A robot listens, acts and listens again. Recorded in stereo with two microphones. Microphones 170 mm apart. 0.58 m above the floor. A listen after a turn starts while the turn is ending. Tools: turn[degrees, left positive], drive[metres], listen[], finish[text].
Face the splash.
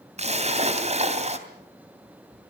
Thought: The splash: about 40° right or 140° right.
Action: turn[-40]
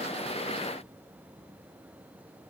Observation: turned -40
Action: listen[]
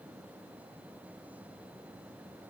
Action: finish[I heard a splash, but can't make it out now. It was about straight ahead or 100° right.]